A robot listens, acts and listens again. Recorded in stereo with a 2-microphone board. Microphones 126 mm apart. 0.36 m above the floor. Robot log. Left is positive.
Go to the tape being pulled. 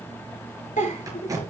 note: The tape being pulled: about 25° right or 155° right.
cmd yaw -25
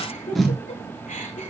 cmd fwd 1.0
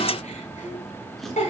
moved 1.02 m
cmd idle
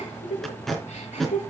cmd fwd 1.0
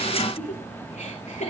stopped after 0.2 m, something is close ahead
cmd idle
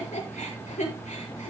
cmd idle
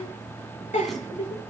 end: Facing where the tape being pulled came from. I can't hear it now. I did not reach it.